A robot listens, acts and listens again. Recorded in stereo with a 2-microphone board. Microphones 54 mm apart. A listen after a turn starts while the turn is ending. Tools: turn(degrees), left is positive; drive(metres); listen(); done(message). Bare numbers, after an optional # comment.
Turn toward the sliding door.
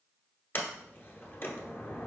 # The sliding door: about 40° left or 140° left.
turn(40)
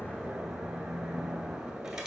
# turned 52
listen()
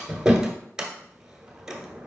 # So it is at 15° right.
turn(-15)
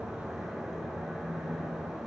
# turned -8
listen()
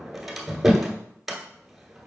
done("Found it: a sliding door, straight ahead.")